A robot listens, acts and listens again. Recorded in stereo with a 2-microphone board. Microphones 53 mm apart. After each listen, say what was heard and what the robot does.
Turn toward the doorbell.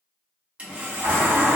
The doorbell: about 50° right or 130° right. Turn 50° right.
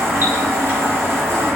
So it is at 60° right. Turn 60° right.
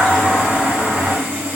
Facing the doorbell, 1 to 2 m away.